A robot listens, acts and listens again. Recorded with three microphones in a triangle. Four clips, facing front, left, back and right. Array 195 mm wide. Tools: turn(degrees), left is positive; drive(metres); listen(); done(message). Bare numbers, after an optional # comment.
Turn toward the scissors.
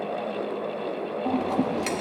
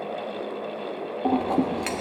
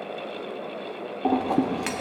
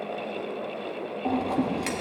# The scissors: 145° left.
turn(145)
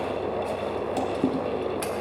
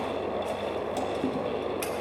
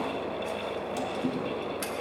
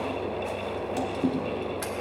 # The scissors is now 10° right.
turn(-10)
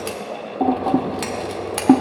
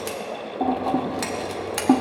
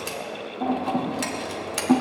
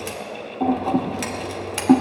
done("Found it: scissors, straight ahead.")